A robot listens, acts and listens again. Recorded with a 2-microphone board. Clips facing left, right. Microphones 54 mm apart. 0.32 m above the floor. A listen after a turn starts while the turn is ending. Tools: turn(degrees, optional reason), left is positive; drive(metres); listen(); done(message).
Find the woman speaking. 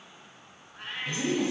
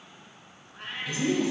turn(degrees=35, reason="The woman speaking: about 35° left or 145° left.")
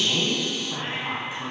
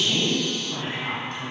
turn(degrees=10, reason="So it is at 10° left.")
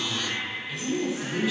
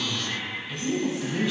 done("Facing the woman speaking.")